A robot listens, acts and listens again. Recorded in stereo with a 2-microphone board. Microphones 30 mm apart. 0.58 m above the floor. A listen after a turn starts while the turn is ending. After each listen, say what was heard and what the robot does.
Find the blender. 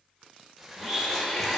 The blender: about 30° left or 150° left. Turn 30° left.
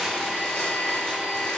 So it is at 120° left. Turn 120° left.
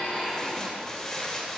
The blender is now 10° right. Turn 10° right.
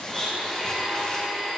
Facing the blender, 2 to 4 m away.